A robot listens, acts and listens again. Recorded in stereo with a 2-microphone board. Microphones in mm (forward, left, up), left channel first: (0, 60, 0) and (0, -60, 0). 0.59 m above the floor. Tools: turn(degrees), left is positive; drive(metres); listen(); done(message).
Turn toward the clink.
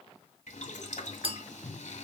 turn(degrees=-50)
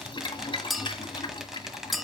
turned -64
done("Facing the clink.")